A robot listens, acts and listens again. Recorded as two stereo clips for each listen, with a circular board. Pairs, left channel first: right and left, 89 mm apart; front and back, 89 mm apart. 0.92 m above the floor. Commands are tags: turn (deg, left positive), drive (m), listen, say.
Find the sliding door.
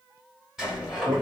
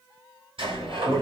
<turn deg="175"/>
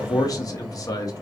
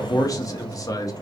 <say>Found it: a sliding door, straight ahead, 2 to 4 m away.</say>